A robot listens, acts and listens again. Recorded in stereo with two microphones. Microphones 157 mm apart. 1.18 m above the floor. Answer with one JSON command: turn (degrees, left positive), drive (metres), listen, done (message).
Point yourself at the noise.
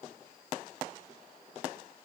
{"listen": true}
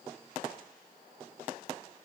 {"listen": true}
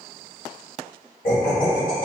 {"turn": 60}
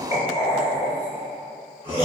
{"turn": 45}
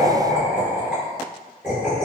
{"done": "Found it: laughter, straight ahead."}